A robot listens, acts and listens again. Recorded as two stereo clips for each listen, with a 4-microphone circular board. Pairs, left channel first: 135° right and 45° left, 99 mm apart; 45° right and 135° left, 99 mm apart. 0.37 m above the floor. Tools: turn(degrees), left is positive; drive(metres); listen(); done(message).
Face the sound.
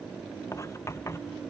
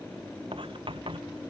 turn(degrees=165)
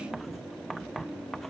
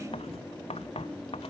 turn(degrees=-45)
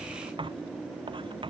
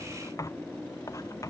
turn(degrees=10)
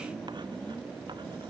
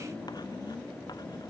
listen()
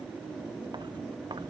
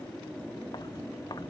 listen()
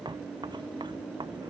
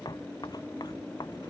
done("Found it: writing, straight ahead.")